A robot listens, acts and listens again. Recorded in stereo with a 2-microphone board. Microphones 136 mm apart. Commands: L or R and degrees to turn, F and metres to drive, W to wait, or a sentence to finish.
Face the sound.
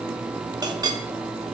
R30
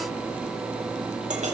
R120
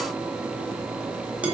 R10
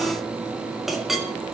Facing the clink, 1 to 2 m away.